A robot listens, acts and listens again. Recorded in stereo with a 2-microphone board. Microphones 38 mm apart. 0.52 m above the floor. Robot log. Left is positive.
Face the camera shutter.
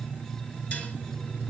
cmd idle
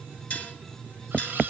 cmd yaw -90
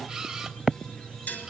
note: So it is at 10° right.
cmd yaw -10
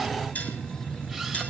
cmd idle
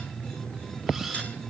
end: Facing the camera shutter.